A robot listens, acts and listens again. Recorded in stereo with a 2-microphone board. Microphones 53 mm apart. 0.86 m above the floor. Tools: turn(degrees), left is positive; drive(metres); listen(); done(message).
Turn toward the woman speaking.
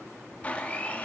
listen()
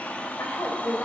turn(degrees=65)
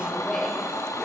turn(degrees=10)
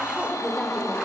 turn(degrees=15)
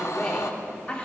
turn(degrees=25)
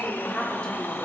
turn(degrees=15)
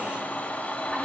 listen()
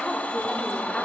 listen()
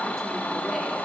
done("Facing where the woman speaking came from. I can't hear it now.")